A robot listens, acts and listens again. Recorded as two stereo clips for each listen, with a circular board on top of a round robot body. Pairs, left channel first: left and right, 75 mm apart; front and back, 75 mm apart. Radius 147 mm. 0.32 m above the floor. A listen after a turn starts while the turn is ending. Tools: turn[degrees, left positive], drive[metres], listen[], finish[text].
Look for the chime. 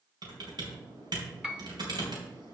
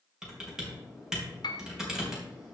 Action: listen[]
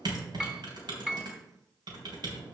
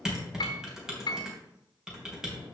Action: listen[]
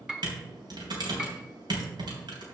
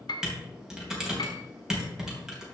Action: finish[I can't make out a chime to turn to.]